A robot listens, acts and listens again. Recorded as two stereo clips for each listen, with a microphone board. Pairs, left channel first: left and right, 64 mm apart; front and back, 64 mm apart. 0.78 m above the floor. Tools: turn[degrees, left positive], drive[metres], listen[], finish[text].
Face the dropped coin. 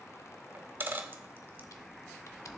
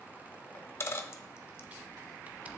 Thought: The dropped coin: 40° right.
Action: turn[-40]
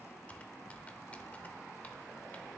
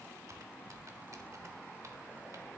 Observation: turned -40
Action: finish[Facing where the dropped coin came from. I can't hear it now.]